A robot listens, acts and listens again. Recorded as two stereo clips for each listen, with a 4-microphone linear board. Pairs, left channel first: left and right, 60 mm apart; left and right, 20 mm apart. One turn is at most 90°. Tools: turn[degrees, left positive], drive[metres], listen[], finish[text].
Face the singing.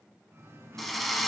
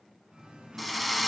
Thought: The singing: about 50° right or 130° right.
Action: turn[-50]
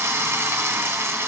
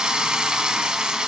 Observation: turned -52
Action: listen[]
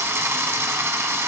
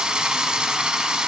Action: listen[]
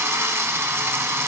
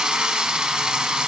Action: finish[I heard singing, but can't make it out now. It was about 5° left or 80° right.]